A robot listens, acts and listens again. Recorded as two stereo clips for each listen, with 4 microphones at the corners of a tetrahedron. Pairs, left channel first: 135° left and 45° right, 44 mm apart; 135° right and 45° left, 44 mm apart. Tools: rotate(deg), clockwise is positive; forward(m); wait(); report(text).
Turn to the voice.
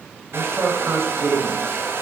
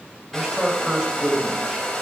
rotate(30)
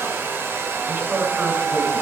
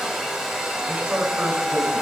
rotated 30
report("Found it: a man speaking, straight ahead.")